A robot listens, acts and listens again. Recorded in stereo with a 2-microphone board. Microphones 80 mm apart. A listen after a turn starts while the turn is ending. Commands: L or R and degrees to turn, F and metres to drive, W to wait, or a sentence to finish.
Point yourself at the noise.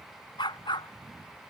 L75
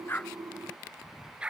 R10
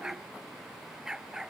Found it: a dog barking, straight ahead.